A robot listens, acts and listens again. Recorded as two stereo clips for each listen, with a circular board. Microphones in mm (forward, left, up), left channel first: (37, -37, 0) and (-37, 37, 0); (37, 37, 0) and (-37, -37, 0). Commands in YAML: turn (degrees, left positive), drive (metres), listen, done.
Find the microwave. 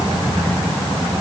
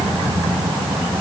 listen: true
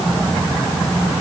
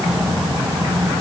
listen: true
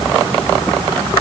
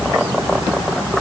done: "I can't make out a microwave to turn to."